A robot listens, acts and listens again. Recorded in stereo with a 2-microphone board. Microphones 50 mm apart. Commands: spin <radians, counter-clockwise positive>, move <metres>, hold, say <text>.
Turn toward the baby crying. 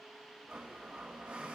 hold
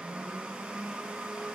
hold
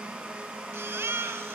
spin -1.05
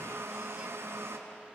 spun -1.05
hold
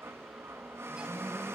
hold
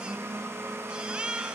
spin -0.44
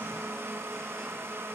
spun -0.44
hold
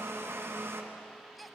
say Facing the baby crying, under 1 m away.